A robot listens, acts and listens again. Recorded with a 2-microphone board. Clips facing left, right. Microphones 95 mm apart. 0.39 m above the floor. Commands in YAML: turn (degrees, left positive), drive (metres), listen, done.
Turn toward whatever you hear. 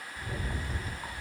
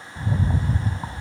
turn: -45
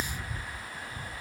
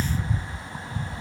turn: -90
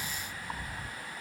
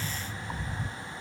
turn: 10
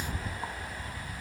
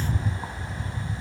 done: "Found it: a rattle, straight ahead, under 1 m away."